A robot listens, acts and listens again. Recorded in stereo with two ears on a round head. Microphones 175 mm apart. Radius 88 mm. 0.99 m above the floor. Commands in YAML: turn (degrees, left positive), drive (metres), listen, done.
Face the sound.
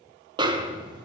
turn: -25
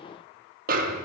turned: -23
turn: -135
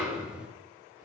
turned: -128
done: "Found it: a snare drum, straight ahead."